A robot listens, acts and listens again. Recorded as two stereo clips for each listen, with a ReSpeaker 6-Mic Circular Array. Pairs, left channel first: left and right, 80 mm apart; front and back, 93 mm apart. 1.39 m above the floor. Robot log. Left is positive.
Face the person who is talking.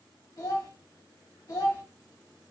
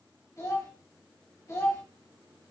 note: The child speaking: 45° left.
cmd yaw +45
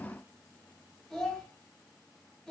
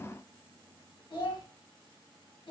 end: Found it: a child speaking, straight ahead, 1 to 2 m away.